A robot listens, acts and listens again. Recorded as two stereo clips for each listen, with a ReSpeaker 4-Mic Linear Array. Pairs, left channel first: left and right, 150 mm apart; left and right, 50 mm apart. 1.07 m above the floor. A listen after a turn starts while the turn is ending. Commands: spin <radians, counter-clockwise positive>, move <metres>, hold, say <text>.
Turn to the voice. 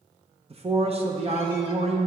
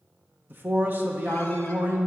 spin -0.79
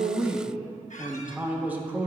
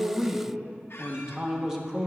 spin -0.26
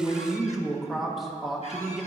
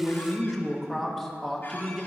say Found it: a man speaking, straight ahead, 1 to 2 m away.